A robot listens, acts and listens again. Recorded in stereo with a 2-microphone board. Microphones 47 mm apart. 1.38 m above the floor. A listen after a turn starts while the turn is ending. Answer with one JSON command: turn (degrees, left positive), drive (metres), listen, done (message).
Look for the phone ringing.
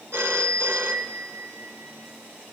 {"turn": -60}
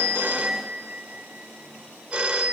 {"turn": -20}
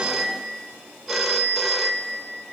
{"done": "Found it: a phone ringing, straight ahead."}